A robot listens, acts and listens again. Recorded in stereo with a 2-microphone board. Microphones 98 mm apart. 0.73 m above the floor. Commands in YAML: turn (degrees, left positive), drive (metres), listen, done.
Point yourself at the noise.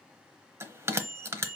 turn: -25
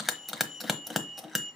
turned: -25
done: "Found it: a bell, straight ahead."